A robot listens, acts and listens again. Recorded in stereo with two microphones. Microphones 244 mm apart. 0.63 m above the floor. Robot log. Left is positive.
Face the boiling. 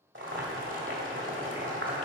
note: The boiling: about 55° right or 125° right.
cmd yaw -55
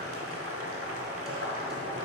note: So it is at 70° right.
cmd yaw -70
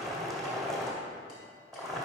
end: Facing the boiling, 1 to 2 m away.